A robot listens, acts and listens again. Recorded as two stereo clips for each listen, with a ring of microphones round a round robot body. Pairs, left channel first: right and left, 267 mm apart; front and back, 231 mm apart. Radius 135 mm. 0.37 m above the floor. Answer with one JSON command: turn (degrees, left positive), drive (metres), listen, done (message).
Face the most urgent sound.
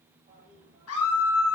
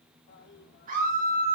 {"turn": -125}
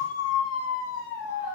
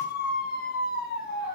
{"turn": -55}
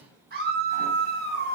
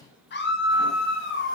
{"turn": 35}
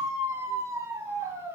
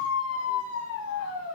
{"turn": 10}
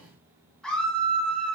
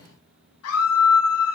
{"done": "Facing the scream, 2 to 4 m away."}